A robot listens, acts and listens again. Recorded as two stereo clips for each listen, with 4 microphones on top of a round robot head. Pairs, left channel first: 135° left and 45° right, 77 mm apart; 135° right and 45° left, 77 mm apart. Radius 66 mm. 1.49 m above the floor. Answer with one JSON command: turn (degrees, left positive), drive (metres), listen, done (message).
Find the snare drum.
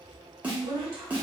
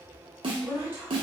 {"turn": 30}
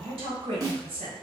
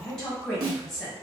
{"done": "Found it: a snare drum, straight ahead, under 1 m away."}